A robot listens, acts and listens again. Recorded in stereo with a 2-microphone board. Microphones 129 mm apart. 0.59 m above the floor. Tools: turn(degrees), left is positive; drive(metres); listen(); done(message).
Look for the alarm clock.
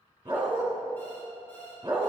turn(degrees=30)
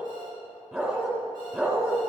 listen()
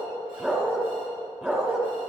listen()
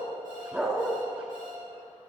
done("I heard an alarm clock, but can't make it out now. It was about 15° right or 135° left.")